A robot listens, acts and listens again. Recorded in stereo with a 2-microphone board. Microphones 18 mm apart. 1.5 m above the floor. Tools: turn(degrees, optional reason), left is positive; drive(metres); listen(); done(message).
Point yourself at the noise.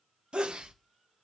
turn(degrees=-70, reason="The sneeze: about 70° right or 110° right.")
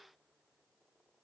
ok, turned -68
listen()
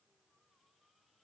done("I heard a sneeze, but can't make it out now. It was about straight ahead or 40° right.")